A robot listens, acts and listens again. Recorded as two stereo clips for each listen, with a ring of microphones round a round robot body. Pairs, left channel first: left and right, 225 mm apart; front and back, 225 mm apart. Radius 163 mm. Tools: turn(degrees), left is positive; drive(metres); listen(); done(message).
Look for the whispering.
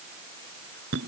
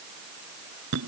listen()
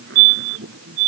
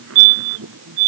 listen()
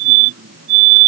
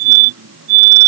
done("I can't make out whispering to turn to.")